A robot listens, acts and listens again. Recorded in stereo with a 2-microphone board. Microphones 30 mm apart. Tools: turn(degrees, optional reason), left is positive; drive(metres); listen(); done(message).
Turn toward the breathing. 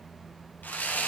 listen()
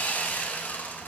listen()
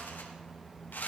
done("I can't make out breathing to turn to.")